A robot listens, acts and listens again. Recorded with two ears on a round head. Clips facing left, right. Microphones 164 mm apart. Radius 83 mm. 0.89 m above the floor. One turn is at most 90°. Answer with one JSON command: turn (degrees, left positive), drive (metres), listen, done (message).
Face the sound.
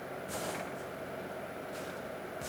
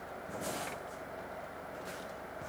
{"listen": true}
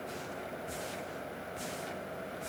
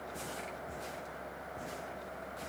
{"listen": true}
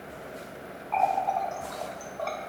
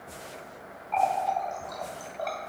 {"turn": -20}
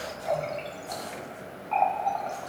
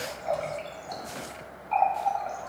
{"done": "Found it: a running tap, straight ahead."}